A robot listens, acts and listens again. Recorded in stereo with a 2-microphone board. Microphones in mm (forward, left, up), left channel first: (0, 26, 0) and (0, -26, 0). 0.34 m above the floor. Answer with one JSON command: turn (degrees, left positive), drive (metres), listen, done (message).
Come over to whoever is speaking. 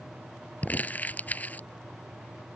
{"listen": true}
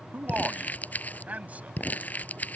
{"turn": -30}
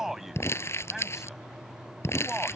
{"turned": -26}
{"turn": -10}
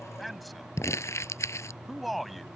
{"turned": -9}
{"drive": 1.0}
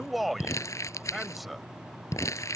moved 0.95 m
{"drive": 1.0}
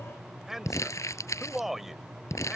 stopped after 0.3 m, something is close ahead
{"turn": -10}
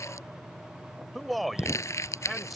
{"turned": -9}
{"done": "Arrived at the man speaking, straight ahead."}